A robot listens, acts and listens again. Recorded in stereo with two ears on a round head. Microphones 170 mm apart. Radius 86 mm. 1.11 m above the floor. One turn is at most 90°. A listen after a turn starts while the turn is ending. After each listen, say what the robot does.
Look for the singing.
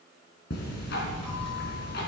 Keep listening.
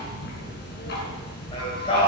Turn 30° left.
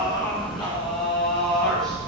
Found it: singing, straight ahead, over 4 m away.